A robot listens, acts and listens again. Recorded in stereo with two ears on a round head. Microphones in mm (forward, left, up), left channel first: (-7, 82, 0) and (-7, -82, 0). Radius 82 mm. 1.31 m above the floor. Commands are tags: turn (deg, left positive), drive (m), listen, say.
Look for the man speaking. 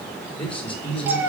<turn deg="30"/>
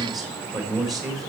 <say>Facing the man speaking.</say>